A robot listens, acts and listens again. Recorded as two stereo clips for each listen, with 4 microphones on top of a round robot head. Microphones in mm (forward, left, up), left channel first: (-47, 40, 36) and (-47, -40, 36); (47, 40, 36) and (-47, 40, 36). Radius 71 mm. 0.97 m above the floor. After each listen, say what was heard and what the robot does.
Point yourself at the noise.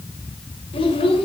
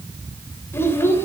The child speaking: 65° left. Turn 65° left.
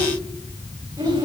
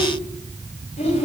The child speaking is now 25° right. Turn 25° right.
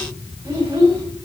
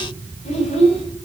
The child speaking is now 25° right. Turn 25° right.
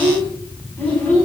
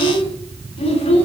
The child speaking is now 15° left. Turn 15° left.
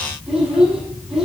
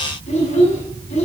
Found it: a child speaking, straight ahead.